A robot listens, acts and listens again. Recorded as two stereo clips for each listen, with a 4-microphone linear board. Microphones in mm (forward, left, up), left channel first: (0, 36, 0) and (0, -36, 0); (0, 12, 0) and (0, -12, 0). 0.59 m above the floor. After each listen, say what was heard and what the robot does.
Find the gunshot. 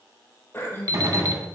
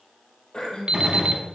The gunshot: about 45° right or 135° right. Turn 45° right.
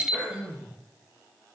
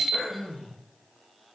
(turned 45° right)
Keep listening.
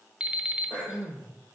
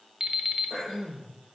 I heard a gunshot, but can't make it out now. It was about straight ahead or 90° right.